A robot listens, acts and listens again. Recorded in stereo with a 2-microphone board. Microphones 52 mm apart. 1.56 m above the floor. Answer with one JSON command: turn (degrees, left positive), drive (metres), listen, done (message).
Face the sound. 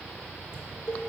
{"turn": 55}
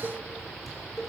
{"done": "Facing the dishes clattering, 2 to 4 m away."}